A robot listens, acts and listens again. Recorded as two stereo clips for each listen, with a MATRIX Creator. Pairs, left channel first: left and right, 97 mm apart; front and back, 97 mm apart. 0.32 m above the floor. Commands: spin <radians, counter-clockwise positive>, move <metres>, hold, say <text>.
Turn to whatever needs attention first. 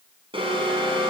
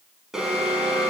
spin -1.66
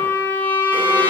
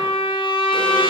hold
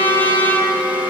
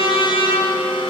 spin -0.35
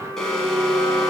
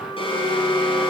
say Facing the alarm.